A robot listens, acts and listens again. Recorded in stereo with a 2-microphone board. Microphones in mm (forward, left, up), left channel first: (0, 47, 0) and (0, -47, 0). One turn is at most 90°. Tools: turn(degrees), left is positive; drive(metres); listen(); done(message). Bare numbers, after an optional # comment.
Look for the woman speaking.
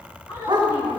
# The woman speaking: about 45° left or 135° left.
turn(45)
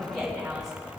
done("Facing the woman speaking.")